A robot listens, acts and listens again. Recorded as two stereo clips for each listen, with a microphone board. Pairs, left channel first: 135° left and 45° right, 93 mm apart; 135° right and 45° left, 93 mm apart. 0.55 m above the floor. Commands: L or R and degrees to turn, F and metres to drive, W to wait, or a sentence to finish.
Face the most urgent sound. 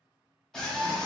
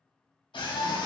R145
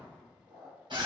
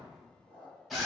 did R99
R45
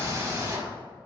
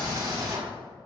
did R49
Facing the scream.